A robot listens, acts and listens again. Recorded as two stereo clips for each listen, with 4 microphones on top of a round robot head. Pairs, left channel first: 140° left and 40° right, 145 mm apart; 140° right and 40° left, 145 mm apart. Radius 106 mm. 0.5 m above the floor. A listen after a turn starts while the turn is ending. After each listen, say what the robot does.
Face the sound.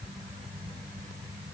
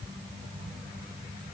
Keep listening.
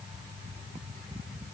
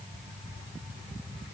Keep listening.
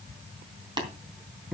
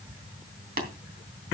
Turn 20° left.
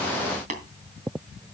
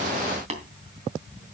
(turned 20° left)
Found it: tapping, straight ahead, 2 to 4 m away.